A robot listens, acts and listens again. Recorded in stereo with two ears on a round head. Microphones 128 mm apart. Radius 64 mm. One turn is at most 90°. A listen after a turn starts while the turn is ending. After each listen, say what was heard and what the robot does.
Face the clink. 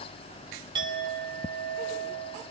The clink: about 35° right or 145° right. Turn 35° right.
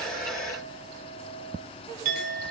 So it is at 110° right. Turn 90° right.
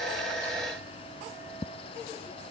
Nothing new. It was at 20° right. Turn 20° right.
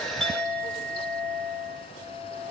Facing the clink.